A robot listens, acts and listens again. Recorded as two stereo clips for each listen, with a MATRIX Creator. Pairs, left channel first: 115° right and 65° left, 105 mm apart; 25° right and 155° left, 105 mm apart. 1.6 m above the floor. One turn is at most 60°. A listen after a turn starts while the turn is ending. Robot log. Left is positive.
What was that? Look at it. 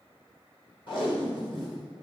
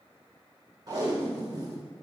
note: The tape being pulled: 150° right.
cmd yaw -60
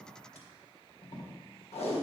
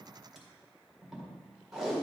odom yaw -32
note: The tape being pulled is now 115° right.
cmd yaw -60
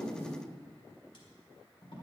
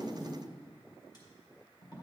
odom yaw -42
note: The tape being pulled is now 70° right.
cmd yaw -60
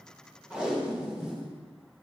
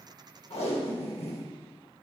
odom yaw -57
note: The tape being pulled is now 15° right.
cmd yaw -15
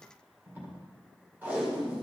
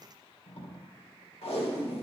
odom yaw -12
end: Facing the tape being pulled, 1 to 2 m away.